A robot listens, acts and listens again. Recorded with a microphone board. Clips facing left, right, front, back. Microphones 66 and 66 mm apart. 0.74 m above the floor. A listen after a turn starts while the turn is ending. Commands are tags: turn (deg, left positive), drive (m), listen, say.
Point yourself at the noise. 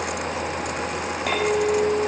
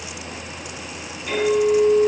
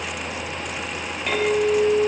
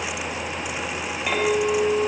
<turn deg="95"/>
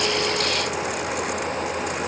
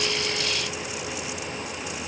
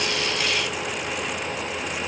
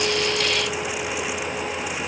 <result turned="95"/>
<listen/>
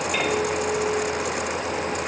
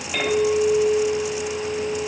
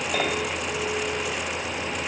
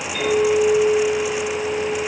<say>Found it: a clink, straight ahead, 2 to 4 m away.</say>